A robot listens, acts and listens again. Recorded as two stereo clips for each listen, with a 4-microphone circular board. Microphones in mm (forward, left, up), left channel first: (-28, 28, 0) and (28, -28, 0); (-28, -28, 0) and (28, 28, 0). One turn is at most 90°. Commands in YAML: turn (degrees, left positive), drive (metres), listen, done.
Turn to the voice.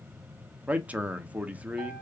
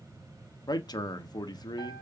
turn: -90
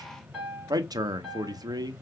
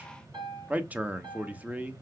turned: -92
turn: -25
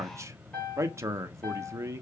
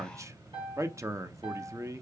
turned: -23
done: "Found it: a man speaking, straight ahead."